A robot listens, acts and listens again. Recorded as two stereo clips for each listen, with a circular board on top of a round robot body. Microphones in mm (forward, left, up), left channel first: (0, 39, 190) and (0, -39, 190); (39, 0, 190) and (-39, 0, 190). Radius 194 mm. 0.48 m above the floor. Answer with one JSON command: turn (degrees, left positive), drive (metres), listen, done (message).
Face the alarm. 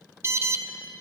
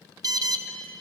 {"turn": -145}
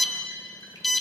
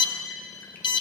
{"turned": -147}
{"done": "Facing the alarm."}